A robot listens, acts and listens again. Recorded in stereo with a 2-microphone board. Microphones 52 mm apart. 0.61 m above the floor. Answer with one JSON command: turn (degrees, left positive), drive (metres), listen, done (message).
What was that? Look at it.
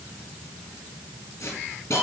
{"turn": 70}
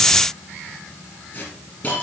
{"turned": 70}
{"turn": 40}
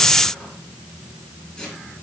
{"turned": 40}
{"turn": 20}
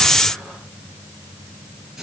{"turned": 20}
{"done": "Facing the hiss."}